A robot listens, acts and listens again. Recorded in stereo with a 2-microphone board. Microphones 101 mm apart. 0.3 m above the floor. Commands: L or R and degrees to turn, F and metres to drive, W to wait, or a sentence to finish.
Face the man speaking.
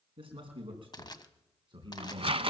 R50
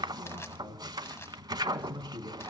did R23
R55
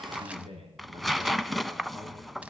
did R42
R70
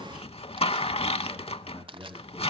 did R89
Found it: a man speaking, straight ahead, over 4 m away.